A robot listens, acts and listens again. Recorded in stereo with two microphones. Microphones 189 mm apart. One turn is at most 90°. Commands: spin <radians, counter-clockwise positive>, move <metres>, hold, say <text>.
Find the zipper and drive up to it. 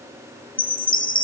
hold
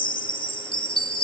hold
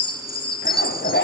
spin 1.22
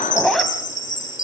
move 1.0
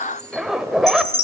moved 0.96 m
move 1.0
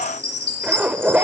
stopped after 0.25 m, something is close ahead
say I am next to the zipper.